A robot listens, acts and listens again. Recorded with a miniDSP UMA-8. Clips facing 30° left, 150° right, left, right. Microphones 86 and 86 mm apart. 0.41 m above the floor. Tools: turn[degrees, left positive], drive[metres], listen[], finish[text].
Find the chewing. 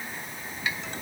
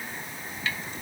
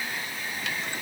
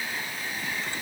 Action: listen[]
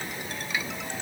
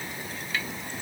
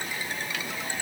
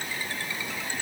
Action: listen[]
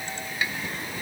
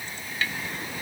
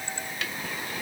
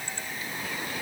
Action: finish[I can't make out chewing.]